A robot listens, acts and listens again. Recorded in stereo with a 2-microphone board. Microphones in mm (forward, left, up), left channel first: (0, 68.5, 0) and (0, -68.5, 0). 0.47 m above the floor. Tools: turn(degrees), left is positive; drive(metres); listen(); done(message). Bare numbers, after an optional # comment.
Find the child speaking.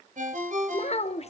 # The child speaking: about 45° left or 135° left.
turn(45)
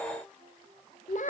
# So it is at 80° left.
turn(80)
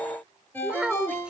done("Found it: a child speaking, straight ahead.")